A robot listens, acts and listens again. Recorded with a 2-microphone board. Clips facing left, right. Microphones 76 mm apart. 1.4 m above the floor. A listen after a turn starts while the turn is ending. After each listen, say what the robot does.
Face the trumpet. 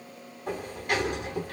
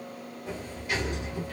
Keep listening.
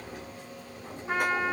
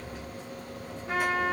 Turn 20° left.
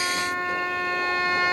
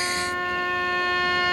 Turn 135° left.
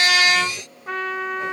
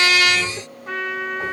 Found it: a trumpet, straight ahead.